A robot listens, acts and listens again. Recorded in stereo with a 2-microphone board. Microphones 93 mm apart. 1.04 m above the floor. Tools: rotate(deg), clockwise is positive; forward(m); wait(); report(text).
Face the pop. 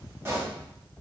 rotate(25)
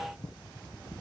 wait()
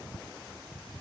report("I heard a pop, but can't make it out now. It was about straight ahead or 130° right.")